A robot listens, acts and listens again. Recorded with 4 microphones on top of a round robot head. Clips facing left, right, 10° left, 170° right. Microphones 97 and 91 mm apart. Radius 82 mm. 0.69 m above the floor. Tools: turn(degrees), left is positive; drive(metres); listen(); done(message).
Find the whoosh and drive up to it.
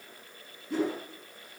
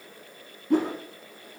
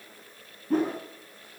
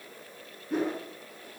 turn(degrees=-50)
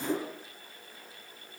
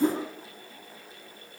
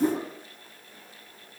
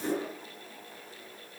turn(degrees=-25)
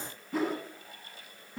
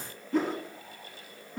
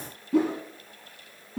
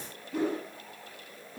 drive(metres=1.0)
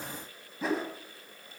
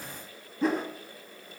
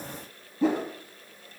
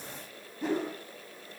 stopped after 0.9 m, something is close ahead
done("Blocked. The whoosh is further on, straight ahead.")